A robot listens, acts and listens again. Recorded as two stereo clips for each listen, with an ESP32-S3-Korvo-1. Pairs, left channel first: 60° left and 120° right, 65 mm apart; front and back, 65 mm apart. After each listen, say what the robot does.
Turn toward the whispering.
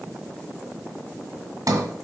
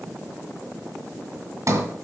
Keep listening.
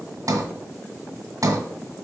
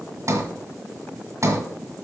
Keep listening.
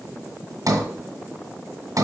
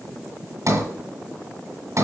I can't make out whispering to turn to.